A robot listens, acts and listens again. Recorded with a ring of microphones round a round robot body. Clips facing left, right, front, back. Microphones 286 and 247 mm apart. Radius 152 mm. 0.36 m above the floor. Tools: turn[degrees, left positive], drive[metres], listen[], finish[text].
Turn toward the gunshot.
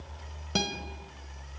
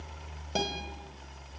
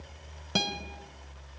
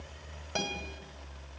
Action: listen[]
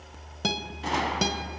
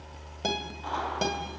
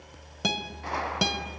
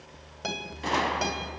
Thought: The gunshot: 135° left.
Action: turn[135]
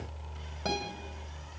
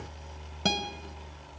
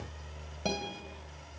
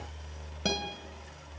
Action: finish[Facing where the gunshot came from. I can't hear it now.]